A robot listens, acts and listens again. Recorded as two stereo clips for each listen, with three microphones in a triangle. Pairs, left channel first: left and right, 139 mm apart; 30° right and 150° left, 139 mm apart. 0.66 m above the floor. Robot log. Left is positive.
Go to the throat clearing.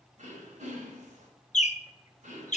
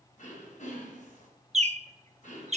note: The throat clearing: 60° right.
cmd yaw -60
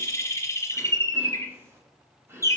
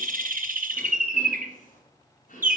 note: The throat clearing is now 15° right.
cmd yaw -15
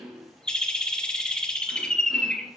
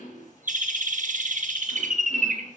cmd fwd 1.0
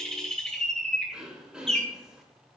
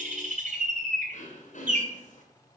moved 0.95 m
cmd fwd 1.0
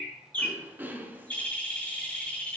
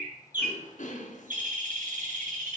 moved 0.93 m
note: The throat clearing is now 15° right.
cmd yaw -15
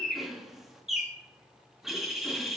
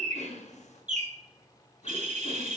cmd fwd 1.0
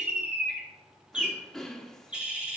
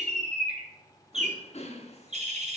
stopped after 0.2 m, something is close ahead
end: I am next to the throat clearing.